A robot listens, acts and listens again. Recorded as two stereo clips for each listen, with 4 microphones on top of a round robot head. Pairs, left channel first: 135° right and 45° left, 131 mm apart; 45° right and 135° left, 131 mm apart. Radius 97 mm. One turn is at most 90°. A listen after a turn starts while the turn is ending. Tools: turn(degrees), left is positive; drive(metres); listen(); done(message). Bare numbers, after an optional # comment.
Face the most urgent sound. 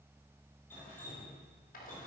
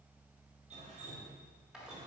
listen()
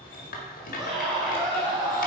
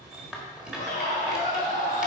# The scream: 15° right.
turn(-15)
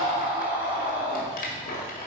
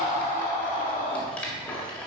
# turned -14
done("Facing the scream.")